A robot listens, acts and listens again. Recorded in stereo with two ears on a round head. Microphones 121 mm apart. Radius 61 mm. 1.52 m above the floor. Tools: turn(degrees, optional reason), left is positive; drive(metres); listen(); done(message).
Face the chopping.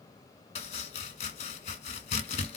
turn(degrees=50, reason="The chopping: about 50° left or 130° left.")
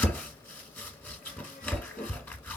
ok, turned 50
turn(degrees=15, reason="So it is at 15° left.")
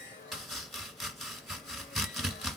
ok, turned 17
done("Facing the chopping.")